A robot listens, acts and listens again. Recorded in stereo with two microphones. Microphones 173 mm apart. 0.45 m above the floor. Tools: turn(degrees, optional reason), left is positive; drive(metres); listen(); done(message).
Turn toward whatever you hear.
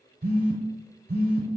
turn(degrees=-65, reason="The phone buzzing: about 65° right or 115° right.")
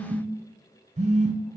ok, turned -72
turn(degrees=-40, reason="So it is at 40° right.")
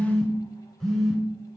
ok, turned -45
done("Found it: a phone buzzing, straight ahead.")